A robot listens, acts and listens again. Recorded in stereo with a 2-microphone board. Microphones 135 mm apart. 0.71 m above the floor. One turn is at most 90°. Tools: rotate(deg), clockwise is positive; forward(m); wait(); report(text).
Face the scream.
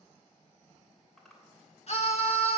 rotate(-55)
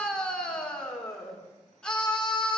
report("Facing the scream, 2 to 4 m away.")